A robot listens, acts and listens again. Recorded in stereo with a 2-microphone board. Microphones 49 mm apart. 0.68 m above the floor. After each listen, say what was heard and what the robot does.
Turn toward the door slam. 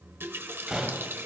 Turn 30° right.
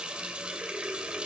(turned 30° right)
Keep listening.
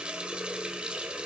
I heard a door slam, but can't make it out now. It was about 15° left or 135° right.